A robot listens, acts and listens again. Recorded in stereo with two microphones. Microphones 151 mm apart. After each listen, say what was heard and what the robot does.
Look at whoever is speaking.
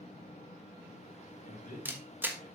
The man speaking: about 60° left or 120° left. Turn 60° left.
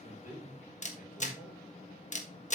So it is at 60° left. Turn 60° left.
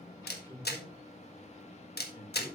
The man speaking is now 20° left. Turn 20° left.
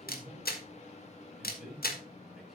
Found it: a man speaking, straight ahead.